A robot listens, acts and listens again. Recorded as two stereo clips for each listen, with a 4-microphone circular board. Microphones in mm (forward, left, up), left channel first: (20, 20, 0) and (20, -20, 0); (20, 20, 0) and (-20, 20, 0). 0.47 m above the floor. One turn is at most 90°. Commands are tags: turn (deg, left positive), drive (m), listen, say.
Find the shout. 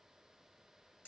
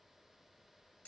<listen/>
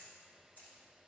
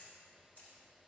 <listen/>
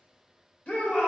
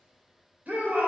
<turn deg="90"/>
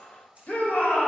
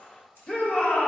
<turn deg="55"/>
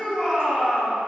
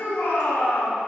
<say>Facing the shout, 1 to 2 m away.</say>